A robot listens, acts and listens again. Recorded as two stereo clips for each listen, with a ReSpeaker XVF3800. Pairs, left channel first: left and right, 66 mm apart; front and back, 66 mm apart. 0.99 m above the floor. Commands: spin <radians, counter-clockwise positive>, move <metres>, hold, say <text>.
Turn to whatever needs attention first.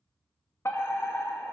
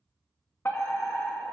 spin 0.87
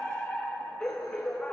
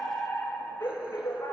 spin 0.26
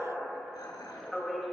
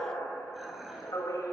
say Found it: a fire alarm, straight ahead.